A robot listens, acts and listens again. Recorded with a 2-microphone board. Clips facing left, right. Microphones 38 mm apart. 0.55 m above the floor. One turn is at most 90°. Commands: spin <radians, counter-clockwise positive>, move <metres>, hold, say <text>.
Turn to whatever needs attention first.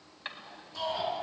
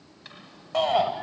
spin -1.22
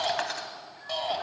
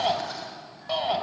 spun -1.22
spin -0.17
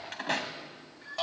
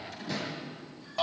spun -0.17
say Found it: a shout, straight ahead.